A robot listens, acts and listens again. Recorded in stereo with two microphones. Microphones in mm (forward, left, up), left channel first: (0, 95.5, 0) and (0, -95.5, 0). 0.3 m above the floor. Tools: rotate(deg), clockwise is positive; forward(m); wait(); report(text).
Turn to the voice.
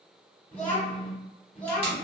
rotate(-30)
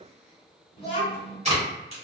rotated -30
rotate(-140)
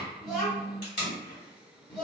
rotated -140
report("Facing the child speaking.")